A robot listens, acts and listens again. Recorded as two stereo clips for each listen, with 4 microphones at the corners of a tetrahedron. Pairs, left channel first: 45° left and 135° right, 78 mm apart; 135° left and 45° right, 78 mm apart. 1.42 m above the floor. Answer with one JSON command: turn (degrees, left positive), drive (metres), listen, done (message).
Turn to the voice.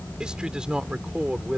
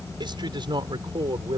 {"turn": -55}
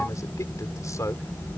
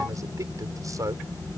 {"done": "Found it: a man speaking, straight ahead."}